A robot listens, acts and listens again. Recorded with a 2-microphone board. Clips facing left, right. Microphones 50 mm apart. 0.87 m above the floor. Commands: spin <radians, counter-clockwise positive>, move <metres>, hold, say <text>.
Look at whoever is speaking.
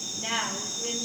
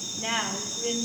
spin -0.35
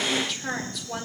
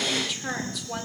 say Facing the woman speaking, 2 to 4 m away.